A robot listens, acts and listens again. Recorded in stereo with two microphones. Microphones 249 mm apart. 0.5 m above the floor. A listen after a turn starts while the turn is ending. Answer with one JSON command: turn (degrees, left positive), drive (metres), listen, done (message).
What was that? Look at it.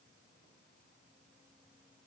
{"listen": true}
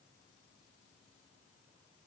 {"listen": true}
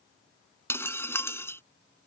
{"turn": 30}
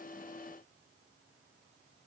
{"listen": true}
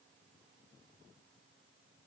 {"done": "I heard breaking glass, but can't make it out now. It was about 20° right or 140° left."}